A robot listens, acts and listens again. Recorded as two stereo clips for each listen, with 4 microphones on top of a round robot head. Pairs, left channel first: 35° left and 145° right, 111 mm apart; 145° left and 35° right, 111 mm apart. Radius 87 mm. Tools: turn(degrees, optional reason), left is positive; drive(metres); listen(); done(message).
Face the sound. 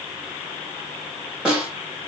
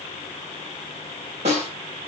turn(degrees=-60, reason="The snare drum: 60° right.")
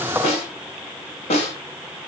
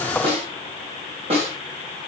done("Facing the snare drum.")